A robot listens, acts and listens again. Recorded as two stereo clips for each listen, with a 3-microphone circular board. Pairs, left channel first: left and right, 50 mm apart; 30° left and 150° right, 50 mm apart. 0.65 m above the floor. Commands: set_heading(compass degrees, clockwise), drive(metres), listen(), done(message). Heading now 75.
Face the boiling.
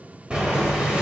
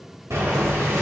set_heading(235)
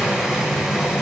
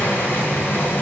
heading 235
set_heading(245)
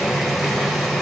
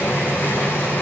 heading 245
done("Found it: boiling, straight ahead, 1 to 2 m away.")